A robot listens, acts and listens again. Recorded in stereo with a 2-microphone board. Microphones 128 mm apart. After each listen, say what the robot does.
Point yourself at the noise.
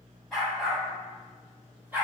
Turn 15° right.
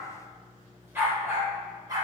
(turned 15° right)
Turn 30° right.
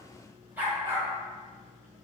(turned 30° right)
Turn 20° right.
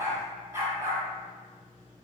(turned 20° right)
Turn 15° right.
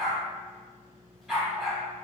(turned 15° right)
Turn 30° left.
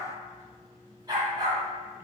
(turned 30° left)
Turn 30° right.
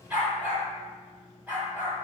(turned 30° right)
Turn 10° right.
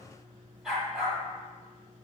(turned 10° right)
Found it: a dog barking, straight ahead.